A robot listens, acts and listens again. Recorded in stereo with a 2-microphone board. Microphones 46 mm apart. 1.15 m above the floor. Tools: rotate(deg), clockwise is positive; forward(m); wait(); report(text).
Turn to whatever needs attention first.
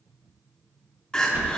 rotate(-15)
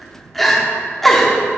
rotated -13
report("Facing the crying, 1 to 2 m away.")